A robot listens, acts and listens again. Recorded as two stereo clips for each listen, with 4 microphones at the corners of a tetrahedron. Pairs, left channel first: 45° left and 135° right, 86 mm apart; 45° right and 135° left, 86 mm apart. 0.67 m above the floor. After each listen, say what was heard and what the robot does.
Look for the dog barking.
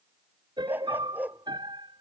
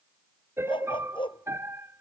The dog barking: 65° right. Turn 65° right.
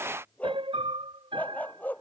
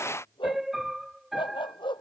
The dog barking is now 25° right. Turn 25° right.
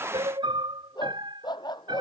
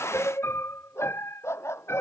The dog barking is now 15° left. Turn 15° left.
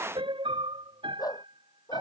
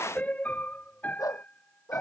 Facing the dog barking.